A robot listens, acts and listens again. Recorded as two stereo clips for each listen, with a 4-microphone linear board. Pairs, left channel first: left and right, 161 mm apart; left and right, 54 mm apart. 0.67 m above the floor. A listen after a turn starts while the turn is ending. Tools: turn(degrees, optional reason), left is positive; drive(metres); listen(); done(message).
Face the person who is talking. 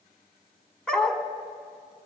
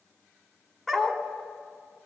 listen()
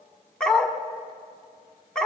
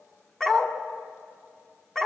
listen()
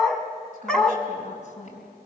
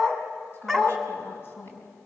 turn(degrees=45, reason="The woman speaking: about 45° left or 135° left.")
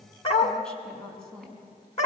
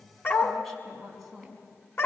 done("Found it: a woman speaking, straight ahead, over 4 m away.")